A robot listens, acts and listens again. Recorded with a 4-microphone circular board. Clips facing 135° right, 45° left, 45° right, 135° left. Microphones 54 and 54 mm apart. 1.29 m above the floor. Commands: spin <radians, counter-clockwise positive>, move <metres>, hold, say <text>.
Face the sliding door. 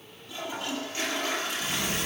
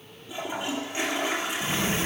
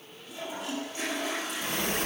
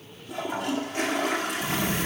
spin -0.26
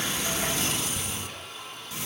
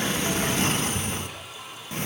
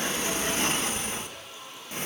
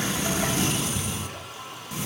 say Found it: a sliding door, straight ahead, under 1 m away.